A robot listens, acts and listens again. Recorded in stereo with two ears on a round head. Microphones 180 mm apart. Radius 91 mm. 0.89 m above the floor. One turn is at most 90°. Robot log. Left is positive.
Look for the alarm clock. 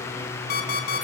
note: The alarm clock: about 55° left or 125° left.
cmd yaw +55
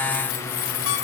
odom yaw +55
cmd idle
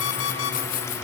note: So it is at 70° left.
cmd yaw +70
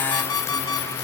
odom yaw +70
note: The alarm clock is now 20° left.
cmd yaw +20
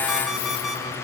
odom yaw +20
end: Found it: an alarm clock, straight ahead, 2 to 4 m away.